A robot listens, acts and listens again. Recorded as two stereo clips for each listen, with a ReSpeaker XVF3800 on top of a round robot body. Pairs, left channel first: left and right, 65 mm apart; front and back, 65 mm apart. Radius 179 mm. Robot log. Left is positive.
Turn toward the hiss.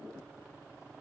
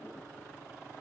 cmd idle
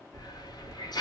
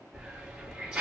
note: The hiss: 100° left.
cmd yaw +100
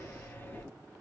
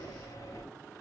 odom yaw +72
note: The hiss is now 30° left.
cmd yaw +30
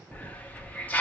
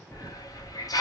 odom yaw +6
note: The hiss is now 20° left.
cmd yaw +20
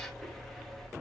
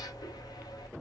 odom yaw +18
end: Found it: a hiss, straight ahead, under 1 m away.